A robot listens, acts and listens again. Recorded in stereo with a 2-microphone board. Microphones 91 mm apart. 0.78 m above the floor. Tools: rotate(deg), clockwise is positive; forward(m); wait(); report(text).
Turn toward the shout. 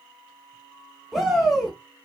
rotate(30)
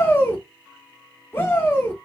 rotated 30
rotate(-25)
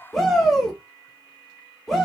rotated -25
report("Found it: a shout, straight ahead, 1 to 2 m away.")